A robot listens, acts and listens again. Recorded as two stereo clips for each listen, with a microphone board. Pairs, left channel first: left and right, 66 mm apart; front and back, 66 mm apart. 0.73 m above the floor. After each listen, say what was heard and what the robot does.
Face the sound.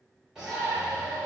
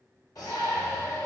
The shout: 10° right. Turn 10° right.
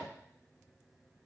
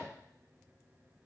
Keep listening.
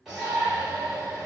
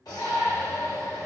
Found it: a shout, straight ahead.